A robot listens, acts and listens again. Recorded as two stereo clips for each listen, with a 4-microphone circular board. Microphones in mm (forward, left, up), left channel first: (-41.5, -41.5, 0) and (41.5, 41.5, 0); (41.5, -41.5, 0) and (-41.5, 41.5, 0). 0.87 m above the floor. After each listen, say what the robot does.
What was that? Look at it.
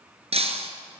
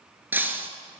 Turn 60° left.
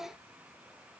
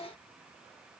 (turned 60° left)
Facing where the breaking glass came from. I can't hear it now.